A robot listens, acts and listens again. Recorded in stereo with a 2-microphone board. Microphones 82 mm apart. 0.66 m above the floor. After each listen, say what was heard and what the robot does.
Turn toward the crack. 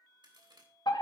The crack: about 60° right or 120° right. Turn 60° right.
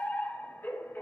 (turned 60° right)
Keep listening.
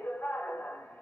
I heard a crack, but can't make it out now. It was about straight ahead or 60° right.